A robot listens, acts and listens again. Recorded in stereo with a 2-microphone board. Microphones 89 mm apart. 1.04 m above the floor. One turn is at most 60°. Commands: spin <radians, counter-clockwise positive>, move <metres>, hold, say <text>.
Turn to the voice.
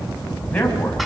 spin 0.35
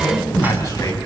spin 1.05
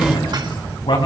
spin 1.05
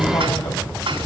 spin 1.05
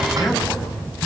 spin 0.44
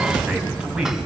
spin -0.17
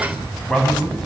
say Facing the man speaking, over 4 m away.